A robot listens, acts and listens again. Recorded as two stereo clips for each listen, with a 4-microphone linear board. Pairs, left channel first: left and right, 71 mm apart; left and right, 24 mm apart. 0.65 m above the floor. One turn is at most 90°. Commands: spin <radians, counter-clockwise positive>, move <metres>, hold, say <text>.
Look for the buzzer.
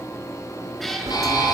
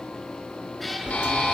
spin 1.57
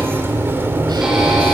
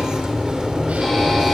hold
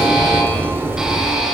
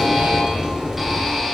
hold
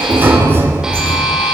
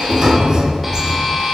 spin -0.17
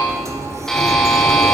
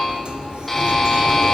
say Facing the buzzer, over 4 m away.